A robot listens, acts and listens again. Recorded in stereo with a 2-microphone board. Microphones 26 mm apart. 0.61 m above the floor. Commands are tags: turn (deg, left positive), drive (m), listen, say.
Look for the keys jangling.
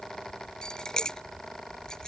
<turn deg="30"/>
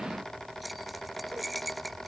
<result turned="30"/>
<say>Facing the keys jangling.</say>